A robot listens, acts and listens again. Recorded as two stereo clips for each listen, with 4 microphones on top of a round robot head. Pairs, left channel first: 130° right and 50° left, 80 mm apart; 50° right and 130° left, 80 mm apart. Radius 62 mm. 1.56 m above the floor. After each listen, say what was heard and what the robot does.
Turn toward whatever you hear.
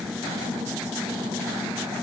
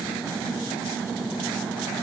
Keep listening.
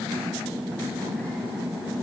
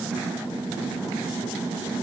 Keep listening.
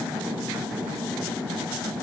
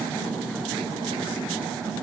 I can't make out anything to turn to.